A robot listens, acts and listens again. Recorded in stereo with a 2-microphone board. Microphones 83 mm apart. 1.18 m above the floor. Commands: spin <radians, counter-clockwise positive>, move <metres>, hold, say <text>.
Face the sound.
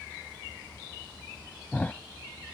spin 0.35
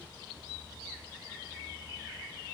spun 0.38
hold
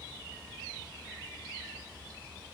say I heard a thud, but can't make it out now. It was about straight ahead or 140° left.